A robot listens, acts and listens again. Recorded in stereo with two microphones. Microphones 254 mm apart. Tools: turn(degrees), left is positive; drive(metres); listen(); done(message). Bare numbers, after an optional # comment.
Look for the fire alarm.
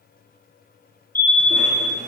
turn(30)
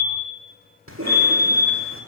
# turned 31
# So it is at 140° left.
turn(140)
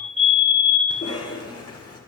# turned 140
done("Found it: a fire alarm, straight ahead.")